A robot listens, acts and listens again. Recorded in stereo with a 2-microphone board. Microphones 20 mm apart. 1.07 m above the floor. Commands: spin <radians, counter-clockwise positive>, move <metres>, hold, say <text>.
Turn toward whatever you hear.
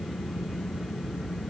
hold
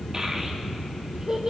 spin -0.61
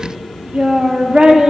spin -1.92
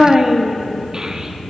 spin -0.61
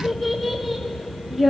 say Found it: a child speaking, straight ahead, 1 to 2 m away.